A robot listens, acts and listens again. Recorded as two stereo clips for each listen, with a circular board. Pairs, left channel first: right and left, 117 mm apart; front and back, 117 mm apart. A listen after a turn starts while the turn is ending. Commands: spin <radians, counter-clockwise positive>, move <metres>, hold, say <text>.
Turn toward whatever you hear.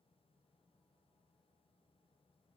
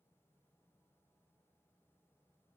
hold
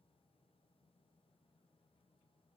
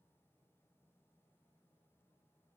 hold
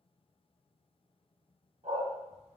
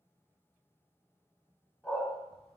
spin 1.40
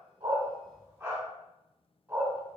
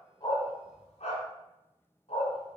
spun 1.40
spin 0.35
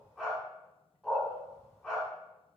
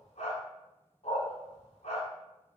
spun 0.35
say Found it: a dog barking, straight ahead, 1 to 2 m away.